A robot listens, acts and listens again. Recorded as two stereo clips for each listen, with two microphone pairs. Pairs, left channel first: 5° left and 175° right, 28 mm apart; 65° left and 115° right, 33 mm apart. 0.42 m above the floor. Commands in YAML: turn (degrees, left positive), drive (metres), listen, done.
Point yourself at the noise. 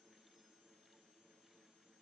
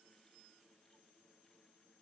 listen: true
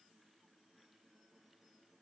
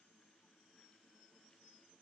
listen: true
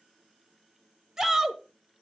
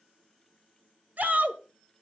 turn: -105
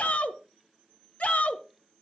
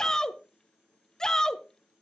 done: "Found it: a shout, straight ahead."